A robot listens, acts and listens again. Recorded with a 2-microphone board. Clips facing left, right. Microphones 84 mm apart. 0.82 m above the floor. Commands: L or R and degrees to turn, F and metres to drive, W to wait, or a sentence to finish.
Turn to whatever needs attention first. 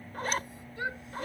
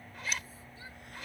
L75
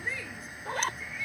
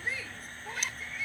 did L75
Facing the shout.